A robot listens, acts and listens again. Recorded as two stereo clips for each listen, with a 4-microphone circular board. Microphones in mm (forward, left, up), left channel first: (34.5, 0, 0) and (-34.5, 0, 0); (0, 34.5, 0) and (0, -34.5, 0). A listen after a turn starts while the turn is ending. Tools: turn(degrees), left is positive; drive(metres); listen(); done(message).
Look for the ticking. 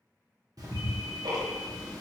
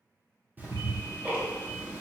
turn(degrees=-155)
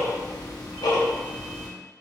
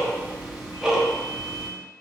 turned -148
turn(degrees=-10)
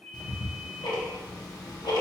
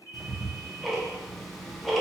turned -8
done("Found it: ticking, straight ahead, under 1 m away.")